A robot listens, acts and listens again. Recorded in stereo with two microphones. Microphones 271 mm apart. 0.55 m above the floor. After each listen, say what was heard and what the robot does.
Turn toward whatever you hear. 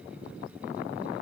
Keep listening.
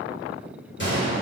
The gunshot: about 45° left or 135° left. Turn 45° left.
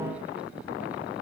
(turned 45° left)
Keep listening.
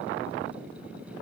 I heard a gunshot, but can't make it out now. It was about straight ahead or 90° left.